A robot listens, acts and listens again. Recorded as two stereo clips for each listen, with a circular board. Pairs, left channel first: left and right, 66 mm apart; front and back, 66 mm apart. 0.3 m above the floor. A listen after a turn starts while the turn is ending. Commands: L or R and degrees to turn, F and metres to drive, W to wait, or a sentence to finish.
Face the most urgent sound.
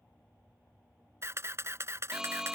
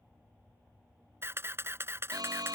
R170
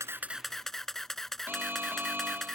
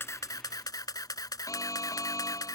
R30
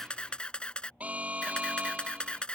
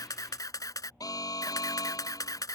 R20
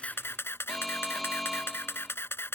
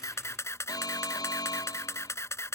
Found it: an alarm, straight ahead.